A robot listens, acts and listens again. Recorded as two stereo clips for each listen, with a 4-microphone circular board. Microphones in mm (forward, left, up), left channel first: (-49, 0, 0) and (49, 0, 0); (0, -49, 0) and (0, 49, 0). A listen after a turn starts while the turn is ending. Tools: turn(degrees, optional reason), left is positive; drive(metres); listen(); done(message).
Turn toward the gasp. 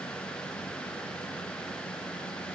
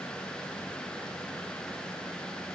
listen()
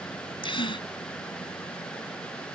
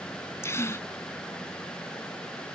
turn(degrees=-155, reason="The gasp: 155° right.")
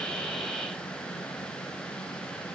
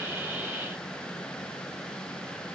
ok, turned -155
done("Facing where the gasp came from. I can't hear it now.")